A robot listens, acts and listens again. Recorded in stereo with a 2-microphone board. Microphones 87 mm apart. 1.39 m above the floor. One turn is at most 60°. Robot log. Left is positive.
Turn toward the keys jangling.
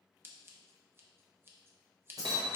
note: The keys jangling: about 45° right or 135° right.
cmd yaw -45
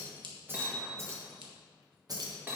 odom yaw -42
note: The keys jangling: about 50° right or 130° right.
cmd yaw -50
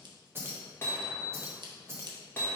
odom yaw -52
note: So it is at 35° right.
cmd yaw -35
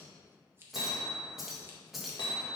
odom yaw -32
end: Found it: keys jangling, straight ahead.